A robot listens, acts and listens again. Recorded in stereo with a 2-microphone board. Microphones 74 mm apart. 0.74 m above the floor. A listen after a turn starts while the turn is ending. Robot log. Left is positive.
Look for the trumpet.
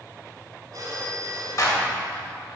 cmd idle
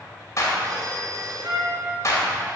cmd yaw -90
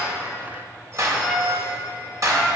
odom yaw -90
end: Facing the trumpet, 2 to 4 m away.